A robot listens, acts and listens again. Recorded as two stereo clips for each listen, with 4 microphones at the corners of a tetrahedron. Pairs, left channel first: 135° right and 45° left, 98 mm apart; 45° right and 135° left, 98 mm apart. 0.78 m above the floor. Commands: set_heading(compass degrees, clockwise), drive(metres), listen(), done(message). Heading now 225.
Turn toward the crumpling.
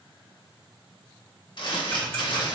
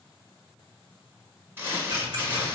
set_heading(25)
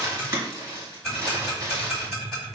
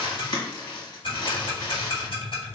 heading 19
done("Facing the crumpling, 1 to 2 m away.")